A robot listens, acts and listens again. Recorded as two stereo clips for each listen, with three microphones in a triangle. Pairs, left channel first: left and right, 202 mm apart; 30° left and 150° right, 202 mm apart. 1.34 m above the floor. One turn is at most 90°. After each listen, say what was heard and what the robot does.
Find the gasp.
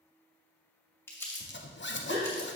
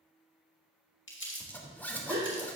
The gasp: 120° right. Turn 90° right.
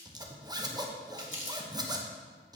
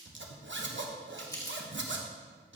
Nothing new. It was at 30° right. Turn 30° right.
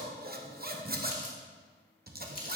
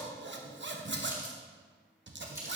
Facing where the gasp came from. I can't hear it now.